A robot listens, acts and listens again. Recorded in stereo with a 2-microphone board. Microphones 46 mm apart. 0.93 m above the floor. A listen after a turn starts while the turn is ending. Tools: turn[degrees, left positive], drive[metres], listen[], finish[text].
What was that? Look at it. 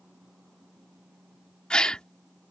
Thought: The gasp: about 20° left or 160° left.
Action: turn[20]
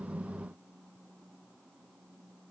Action: listen[]
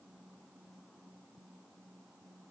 Action: finish[I heard a gasp, but can't make it out now. It was about straight ahead or 140° left.]